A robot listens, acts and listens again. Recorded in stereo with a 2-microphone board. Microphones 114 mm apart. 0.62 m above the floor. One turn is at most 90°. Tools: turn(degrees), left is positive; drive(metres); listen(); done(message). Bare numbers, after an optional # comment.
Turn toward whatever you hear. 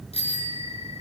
# The bicycle bell: about 65° left or 115° left.
turn(65)
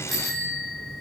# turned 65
done("Facing the bicycle bell.")